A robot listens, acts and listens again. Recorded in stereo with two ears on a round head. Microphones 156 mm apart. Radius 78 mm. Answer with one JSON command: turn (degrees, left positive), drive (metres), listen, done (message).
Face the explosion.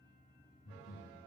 {"listen": true}
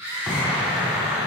{"turn": -30}
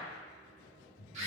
{"listen": true}
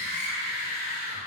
{"done": "I heard an explosion, but can't make it out now. It was about 25° left or 145° right."}